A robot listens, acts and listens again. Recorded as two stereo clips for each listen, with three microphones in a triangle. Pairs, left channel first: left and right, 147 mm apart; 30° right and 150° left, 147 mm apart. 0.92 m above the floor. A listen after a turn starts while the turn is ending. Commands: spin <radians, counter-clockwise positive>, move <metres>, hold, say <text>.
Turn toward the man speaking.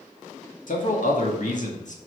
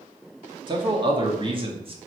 spin 1.83
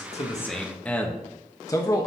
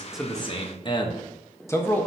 spin 0.79
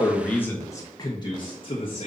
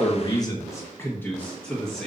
spin 0.96
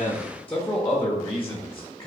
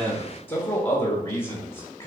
spin 0.26
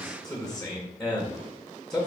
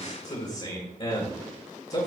say Found it: a man speaking, straight ahead.